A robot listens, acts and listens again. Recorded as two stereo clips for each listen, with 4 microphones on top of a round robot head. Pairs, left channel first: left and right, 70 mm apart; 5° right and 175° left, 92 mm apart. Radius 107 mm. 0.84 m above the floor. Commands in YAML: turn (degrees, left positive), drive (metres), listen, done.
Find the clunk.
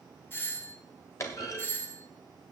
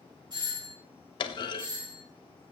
turn: 35
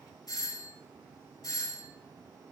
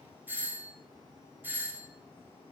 done: "Facing where the clunk came from. I can't hear it now."